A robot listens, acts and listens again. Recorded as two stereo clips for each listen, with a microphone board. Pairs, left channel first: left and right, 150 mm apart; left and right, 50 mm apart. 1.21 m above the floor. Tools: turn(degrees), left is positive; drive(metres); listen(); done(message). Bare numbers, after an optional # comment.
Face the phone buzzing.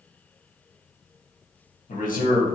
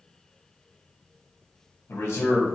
listen()
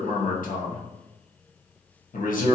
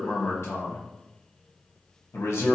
listen()
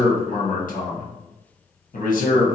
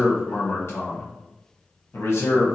done("I can't make out a phone buzzing to turn to.")